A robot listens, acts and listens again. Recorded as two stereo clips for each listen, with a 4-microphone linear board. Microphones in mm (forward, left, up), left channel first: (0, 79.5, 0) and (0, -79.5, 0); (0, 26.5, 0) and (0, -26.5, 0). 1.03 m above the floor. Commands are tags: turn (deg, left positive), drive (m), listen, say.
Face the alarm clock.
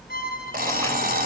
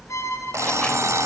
<turn deg="-90"/>
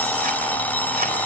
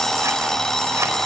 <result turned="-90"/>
<turn deg="10"/>
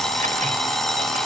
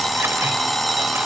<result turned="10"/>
<say>Facing the alarm clock.</say>